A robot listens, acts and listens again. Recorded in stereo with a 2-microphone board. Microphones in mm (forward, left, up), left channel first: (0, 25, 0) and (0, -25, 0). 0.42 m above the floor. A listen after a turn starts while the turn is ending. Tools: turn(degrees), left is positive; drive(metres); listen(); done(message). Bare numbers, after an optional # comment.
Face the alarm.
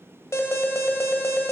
# The alarm: about 65° left or 115° left.
turn(65)
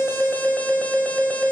# So it is at 35° left.
turn(35)
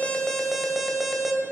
done("Found it: an alarm, straight ahead.")